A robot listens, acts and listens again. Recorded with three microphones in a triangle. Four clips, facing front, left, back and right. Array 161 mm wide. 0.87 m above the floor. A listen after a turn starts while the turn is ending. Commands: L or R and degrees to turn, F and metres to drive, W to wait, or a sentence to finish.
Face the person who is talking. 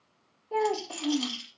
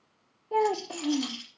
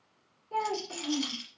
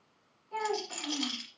L60
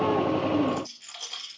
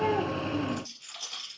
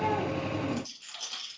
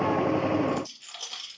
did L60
W
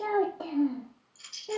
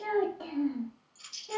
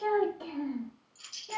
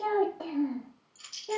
R35
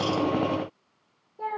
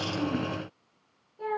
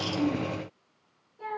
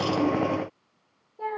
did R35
R35
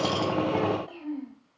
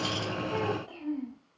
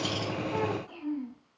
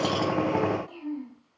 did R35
L10
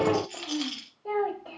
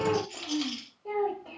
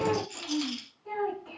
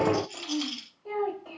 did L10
Facing the child speaking, 2 to 4 m away.